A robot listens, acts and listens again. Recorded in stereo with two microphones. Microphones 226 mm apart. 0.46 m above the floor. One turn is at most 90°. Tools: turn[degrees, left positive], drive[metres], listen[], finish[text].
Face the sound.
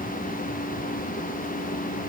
Action: listen[]
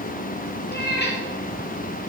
Thought: The cat meowing: about 45° left or 135° left.
Action: turn[45]
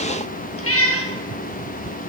Thought: So it is at 85° left.
Action: turn[85]
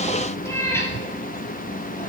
Thought: The cat meowing is now 10° left.
Action: turn[10]
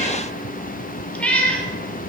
Action: finish[Found it: a cat meowing, straight ahead.]